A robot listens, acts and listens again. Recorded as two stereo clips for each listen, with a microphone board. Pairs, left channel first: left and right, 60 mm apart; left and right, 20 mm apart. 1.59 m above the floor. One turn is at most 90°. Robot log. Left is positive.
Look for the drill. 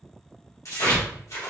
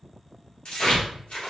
cmd idle
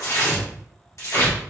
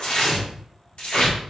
cmd idle
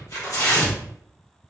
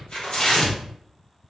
end: I can't make out a drill, only tearing paper.